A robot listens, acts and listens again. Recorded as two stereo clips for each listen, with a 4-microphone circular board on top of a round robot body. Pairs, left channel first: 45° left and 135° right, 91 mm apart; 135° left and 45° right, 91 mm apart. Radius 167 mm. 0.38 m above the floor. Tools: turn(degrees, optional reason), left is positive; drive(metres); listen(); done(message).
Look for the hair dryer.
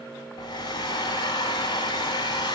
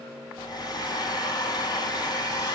turn(degrees=90, reason="The hair dryer: 90° left.")
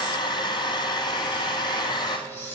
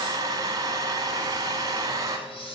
done("Facing the hair dryer.")